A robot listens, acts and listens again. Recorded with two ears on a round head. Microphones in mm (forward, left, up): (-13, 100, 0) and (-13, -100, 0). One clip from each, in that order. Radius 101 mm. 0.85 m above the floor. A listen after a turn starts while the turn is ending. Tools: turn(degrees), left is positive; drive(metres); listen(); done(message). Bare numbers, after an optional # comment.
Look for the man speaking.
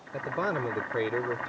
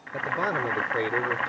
turn(-30)
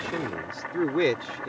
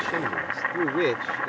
done("Facing the man speaking.")